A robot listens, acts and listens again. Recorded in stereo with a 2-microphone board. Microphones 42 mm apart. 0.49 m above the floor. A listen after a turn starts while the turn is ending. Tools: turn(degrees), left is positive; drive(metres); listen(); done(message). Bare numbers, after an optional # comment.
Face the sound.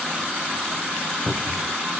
# The cupboard door: about 20° left or 160° left.
turn(20)
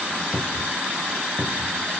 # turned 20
done("Facing the cupboard door, under 1 m away.")